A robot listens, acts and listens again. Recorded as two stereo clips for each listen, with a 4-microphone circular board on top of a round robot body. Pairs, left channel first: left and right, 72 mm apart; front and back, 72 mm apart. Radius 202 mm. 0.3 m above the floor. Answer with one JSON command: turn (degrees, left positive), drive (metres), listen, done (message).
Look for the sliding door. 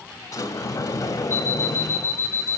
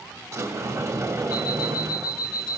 {"turn": 135}
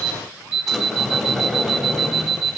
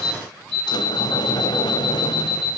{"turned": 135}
{"done": "Facing the sliding door, 1 to 2 m away."}